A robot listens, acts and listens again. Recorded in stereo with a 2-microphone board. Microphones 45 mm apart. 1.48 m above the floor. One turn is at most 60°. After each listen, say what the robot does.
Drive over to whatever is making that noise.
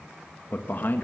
Turn 45° left.
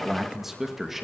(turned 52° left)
Turn 10° right.
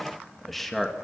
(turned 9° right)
Drive 1.0 m forward.
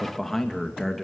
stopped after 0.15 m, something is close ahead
Something is in my way. I am facing the man speaking but have not reached it.